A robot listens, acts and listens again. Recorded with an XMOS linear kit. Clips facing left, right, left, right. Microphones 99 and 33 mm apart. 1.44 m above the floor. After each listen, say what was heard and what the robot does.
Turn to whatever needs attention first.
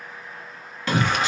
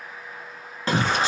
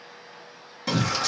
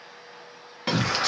The shout: about 35° right or 145° right. Turn 35° right.
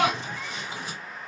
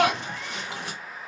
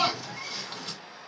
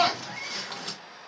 So it is at 110° right. Turn 110° right.
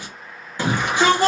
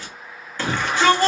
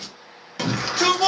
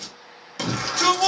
The shout is now 15° left. Turn 15° left.
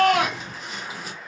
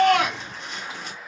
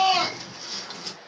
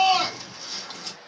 Facing the shout, 2 to 4 m away.